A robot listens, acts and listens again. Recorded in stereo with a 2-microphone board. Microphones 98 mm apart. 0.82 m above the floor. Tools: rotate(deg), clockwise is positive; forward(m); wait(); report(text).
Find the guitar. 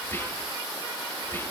wait()
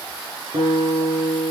rotate(70)
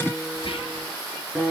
report("Facing the guitar, over 4 m away.")